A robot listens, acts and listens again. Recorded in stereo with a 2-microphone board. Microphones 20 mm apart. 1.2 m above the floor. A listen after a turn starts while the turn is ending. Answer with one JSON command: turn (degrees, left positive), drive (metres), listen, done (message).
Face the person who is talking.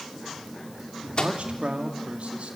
{"turn": -90}
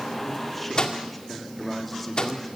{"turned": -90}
{"done": "Facing the man speaking."}